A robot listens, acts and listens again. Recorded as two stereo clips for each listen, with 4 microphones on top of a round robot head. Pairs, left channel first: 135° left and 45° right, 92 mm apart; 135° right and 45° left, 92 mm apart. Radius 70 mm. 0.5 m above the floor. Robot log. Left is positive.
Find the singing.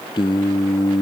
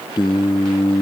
note: The singing: straight behind.
cmd yaw +180
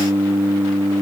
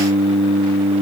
note: The singing is now 20° left.
cmd yaw +20
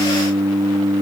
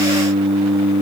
note: The singing is now 10° left.
cmd yaw +10
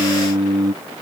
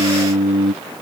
end: Found it: singing, straight ahead.